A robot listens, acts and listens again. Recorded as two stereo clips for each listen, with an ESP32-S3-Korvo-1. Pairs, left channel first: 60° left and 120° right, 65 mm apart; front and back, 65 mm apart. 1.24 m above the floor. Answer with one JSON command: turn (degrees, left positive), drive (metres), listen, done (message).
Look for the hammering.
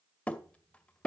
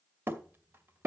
{"turn": 130}
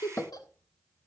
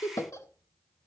{"done": "Facing the hammering."}